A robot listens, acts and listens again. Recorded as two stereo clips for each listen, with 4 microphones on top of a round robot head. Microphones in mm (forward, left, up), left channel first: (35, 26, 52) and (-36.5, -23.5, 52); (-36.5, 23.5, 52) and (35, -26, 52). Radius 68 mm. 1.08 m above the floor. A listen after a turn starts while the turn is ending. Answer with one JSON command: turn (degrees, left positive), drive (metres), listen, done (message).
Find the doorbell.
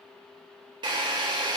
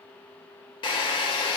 {"listen": true}
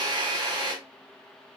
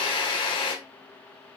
{"listen": true}
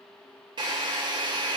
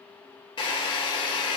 {"done": "I can't make out a doorbell, only a drill."}